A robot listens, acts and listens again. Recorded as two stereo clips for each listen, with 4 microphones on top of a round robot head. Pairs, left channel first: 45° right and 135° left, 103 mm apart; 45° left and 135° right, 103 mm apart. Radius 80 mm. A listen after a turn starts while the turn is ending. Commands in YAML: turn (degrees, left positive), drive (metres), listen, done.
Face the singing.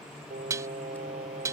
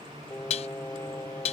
turn: 115
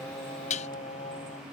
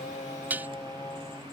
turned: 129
turn: -25
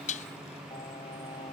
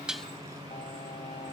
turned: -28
listen: true
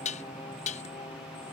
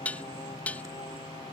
listen: true
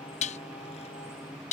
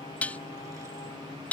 done: "I heard singing from this way, but can't make it out now."